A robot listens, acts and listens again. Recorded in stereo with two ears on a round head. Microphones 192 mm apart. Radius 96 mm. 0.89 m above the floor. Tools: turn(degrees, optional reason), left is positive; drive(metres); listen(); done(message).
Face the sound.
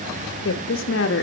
turn(degrees=55, reason="The woman speaking: about 55° left or 125° left.")
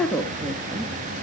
turn(degrees=-15, reason="So it is at 15° right.")
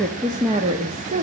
turn(degrees=-35, reason="The woman speaking is now 35° right.")
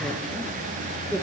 turn(degrees=-10, reason="The woman speaking is now 10° right.")
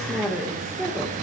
done("Facing the woman speaking, 2 to 4 m away.")